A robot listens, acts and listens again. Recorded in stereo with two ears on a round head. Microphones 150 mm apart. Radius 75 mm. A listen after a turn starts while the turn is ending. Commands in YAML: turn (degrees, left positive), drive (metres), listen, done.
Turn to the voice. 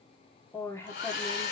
turn: 15
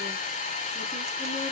listen: true
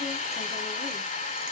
listen: true
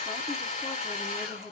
done: "I heard a woman speaking, but can't make it out now. It was about straight ahead or 150° left."